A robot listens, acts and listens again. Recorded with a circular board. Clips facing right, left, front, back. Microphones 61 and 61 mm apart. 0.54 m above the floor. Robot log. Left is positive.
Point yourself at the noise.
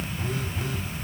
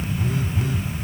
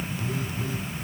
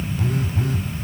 note: The phone buzzing: 175° left.
cmd yaw +175
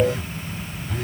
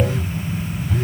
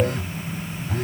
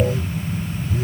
end: Found it: a phone buzzing, straight ahead.